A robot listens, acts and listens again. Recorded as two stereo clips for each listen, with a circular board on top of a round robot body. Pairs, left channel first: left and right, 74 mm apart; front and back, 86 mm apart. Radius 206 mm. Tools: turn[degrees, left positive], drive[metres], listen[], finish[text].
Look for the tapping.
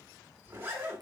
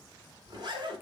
Action: listen[]
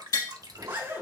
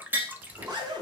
Thought: The tapping: 115° left.
Action: turn[115]
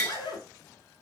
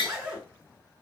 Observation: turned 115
Thought: The tapping is now 10° left.
Action: turn[10]
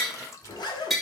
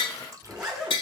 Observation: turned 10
Action: finish[Found it: tapping, straight ahead.]